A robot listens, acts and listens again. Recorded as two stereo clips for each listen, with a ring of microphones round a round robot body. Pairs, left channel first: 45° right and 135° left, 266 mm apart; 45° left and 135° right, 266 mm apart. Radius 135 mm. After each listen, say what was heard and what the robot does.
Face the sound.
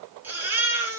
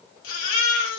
The baby crying: 50° left. Turn 50° left.
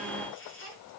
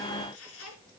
Keep listening.
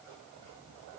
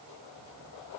Keep listening.
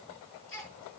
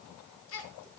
Found it: a baby crying, straight ahead.